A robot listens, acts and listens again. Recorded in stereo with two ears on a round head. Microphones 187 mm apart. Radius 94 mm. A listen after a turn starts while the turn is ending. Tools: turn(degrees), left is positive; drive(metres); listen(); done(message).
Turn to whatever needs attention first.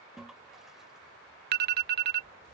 turn(degrees=-50)
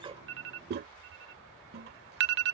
turn(degrees=-75)
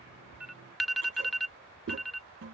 done("Facing the alarm.")